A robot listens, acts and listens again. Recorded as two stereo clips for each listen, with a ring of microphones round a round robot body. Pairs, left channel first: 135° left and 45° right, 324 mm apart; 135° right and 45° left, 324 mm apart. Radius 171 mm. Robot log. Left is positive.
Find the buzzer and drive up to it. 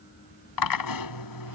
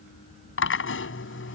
cmd idle
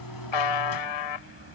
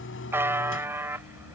note: The buzzer: 130° left.
cmd yaw +130
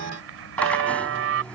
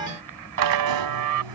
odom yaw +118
note: The buzzer is now 10° left.
cmd yaw +10
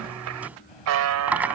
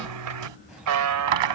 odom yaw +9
cmd fwd 1.0
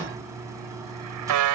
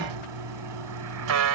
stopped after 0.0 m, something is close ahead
end: Something is in my way. I am facing the buzzer but have not reached it.